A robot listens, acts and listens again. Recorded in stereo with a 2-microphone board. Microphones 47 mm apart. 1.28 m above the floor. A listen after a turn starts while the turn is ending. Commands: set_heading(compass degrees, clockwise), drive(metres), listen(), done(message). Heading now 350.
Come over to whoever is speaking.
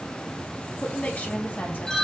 set_heading(310)
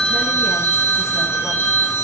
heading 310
listen()
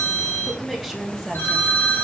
drive(1.0)
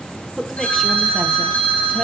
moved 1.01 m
drive(1.0)
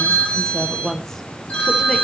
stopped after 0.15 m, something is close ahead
set_heading(300)
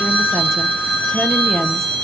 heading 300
listen()
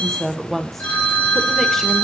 done("I am next to the woman speaking.")